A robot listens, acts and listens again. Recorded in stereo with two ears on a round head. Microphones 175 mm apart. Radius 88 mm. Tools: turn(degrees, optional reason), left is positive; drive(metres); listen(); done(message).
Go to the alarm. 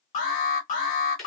turn(degrees=40, reason="The alarm: about 40° left or 140° left.")
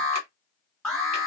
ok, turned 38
drive(metres=1.0)
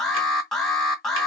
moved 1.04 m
drive(metres=1.0)
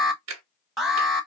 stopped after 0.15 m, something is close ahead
done("I am next to the alarm.")